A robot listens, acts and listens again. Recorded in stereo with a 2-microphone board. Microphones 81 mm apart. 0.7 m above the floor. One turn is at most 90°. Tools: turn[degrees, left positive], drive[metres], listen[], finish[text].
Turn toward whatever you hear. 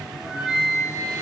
Action: turn[-30]
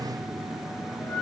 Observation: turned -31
Thought: So it is at 20° left.
Action: turn[20]
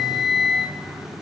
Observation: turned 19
Action: finish[Facing the flute.]